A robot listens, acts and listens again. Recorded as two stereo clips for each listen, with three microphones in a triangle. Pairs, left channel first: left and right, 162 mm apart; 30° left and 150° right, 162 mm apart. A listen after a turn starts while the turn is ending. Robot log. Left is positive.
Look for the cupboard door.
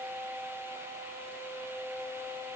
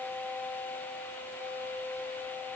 cmd idle
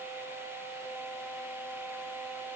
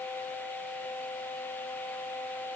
cmd idle
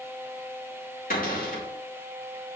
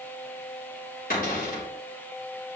note: The cupboard door: 60° left.
cmd yaw +60
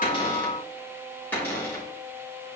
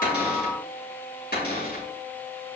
note: The cupboard door is now 10° left.
cmd yaw +10
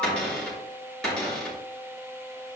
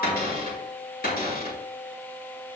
end: Found it: a cupboard door, straight ahead, over 4 m away.